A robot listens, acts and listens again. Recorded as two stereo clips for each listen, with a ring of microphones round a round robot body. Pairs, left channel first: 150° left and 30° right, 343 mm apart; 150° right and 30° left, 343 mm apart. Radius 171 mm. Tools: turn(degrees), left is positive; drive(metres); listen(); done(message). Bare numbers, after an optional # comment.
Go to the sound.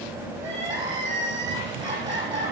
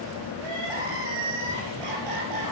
# The crying: 45° left.
turn(45)
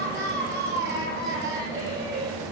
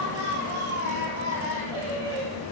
# The crying is now 30° left.
turn(30)
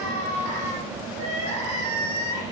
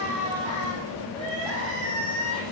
# The crying is now 20° left.
turn(20)
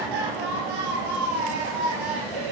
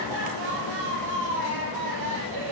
drive(1.0)
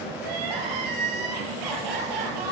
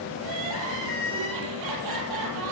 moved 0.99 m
drive(1.0)
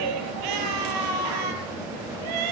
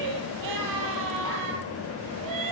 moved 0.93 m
# The crying is now 10° right.
turn(-10)
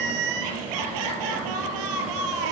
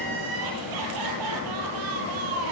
drive(1.0)
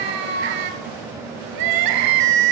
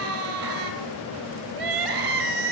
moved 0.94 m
drive(1.0)
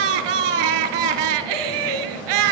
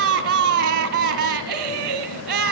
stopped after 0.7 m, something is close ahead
# The crying is now 10° right.
turn(-10)
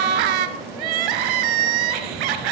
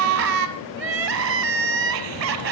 done("I am next to the crying.")